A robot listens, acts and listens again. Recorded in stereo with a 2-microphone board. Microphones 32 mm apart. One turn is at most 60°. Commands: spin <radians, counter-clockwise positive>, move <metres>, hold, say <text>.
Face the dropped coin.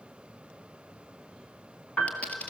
spin 0.87
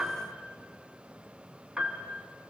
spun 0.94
hold
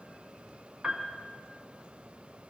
say I heard a dropped coin, but can't make it out now. It was about 5° right or 75° left.